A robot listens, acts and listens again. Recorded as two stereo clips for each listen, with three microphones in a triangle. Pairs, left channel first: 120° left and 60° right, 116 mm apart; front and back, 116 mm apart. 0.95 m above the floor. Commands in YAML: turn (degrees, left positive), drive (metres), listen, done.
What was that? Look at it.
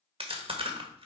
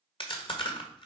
turn: -35
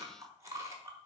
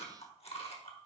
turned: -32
done: "Found it: chewing, straight ahead, 1 to 2 m away."